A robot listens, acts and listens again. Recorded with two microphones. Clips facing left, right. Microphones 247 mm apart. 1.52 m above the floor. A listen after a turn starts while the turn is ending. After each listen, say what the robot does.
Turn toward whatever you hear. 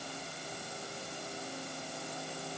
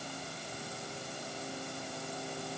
Keep listening.
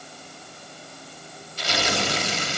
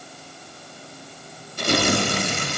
Turn 55° right.
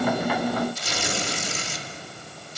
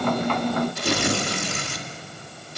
Turn 65° right.
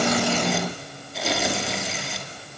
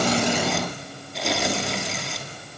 Facing the tearing paper.